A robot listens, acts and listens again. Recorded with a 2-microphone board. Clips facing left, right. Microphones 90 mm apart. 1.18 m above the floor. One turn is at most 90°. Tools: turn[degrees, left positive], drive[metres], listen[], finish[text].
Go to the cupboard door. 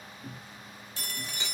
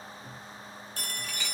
Action: turn[90]
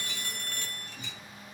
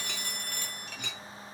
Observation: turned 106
Thought: Nothing new. It was at 15° right.
Action: turn[-15]
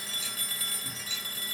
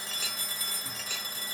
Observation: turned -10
Action: listen[]
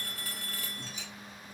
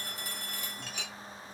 Action: finish[I heard a cupboard door from this way, but can't make it out now. I did not reach it.]